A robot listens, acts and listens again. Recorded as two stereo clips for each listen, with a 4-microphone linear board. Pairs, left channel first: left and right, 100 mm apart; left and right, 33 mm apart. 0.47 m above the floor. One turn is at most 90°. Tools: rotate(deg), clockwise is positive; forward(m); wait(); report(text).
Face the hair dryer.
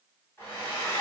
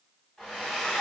rotate(-20)
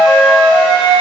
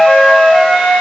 wait()
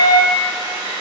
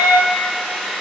rotate(-90)
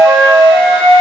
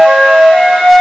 rotate(-45)
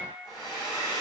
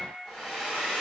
report("Found it: a hair dryer, straight ahead, 1 to 2 m away.")